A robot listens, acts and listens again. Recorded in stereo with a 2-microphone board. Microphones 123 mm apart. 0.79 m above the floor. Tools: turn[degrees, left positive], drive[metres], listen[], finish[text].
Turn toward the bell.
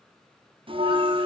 Thought: The bell: about 45° right or 135° right.
Action: turn[-45]
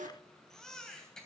Thought: So it is at 90° right.
Action: turn[-90]
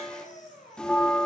Action: finish[Facing the bell.]